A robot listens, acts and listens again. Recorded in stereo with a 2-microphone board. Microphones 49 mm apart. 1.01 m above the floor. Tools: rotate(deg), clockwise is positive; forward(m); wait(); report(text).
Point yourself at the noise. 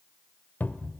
rotate(-35)
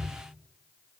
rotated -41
report("Facing the cupboard door, 1 to 2 m away.")